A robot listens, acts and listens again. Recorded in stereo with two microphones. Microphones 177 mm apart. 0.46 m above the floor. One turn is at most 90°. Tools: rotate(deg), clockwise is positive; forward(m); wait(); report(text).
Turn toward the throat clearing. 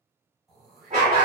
rotate(-30)
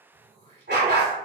rotate(35)
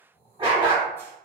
rotate(-15)
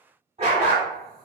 wait()
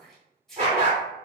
report("Found it: throat clearing, straight ahead.")